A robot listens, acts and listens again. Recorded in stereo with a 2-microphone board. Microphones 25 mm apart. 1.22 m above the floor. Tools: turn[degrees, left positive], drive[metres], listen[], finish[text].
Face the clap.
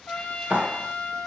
Thought: The clap: about 75° right or 105° right.
Action: turn[-75]
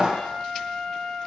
Thought: So it is at 25° right.
Action: turn[-25]
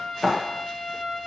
Action: finish[Found it: a clap, straight ahead.]